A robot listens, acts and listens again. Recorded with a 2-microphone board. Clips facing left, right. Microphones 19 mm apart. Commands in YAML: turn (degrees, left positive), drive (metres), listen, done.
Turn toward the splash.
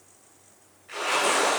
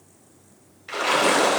turn: -75
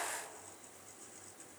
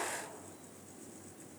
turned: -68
listen: true
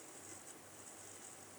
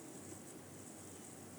done: "I heard a splash, but can't make it out now. It was about 5° right or 40° right."